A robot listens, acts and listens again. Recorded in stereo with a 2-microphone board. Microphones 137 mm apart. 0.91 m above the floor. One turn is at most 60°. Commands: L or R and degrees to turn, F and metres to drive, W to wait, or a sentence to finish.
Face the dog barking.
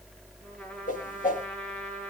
W
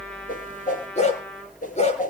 L55
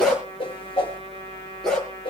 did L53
Found it: a dog barking, straight ahead, over 4 m away.